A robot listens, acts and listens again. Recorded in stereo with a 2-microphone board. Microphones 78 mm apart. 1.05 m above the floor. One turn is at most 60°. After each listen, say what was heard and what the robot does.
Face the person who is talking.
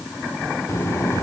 The child speaking: about 40° left or 140° left. Turn 40° left.
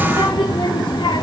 So it is at 100° left. Turn 60° left.
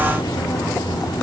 The child speaking is now 70° left. Turn 60° left.
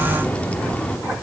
The child speaking is now 20° left. Turn 20° left.
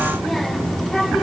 Facing the child speaking, 1 to 2 m away.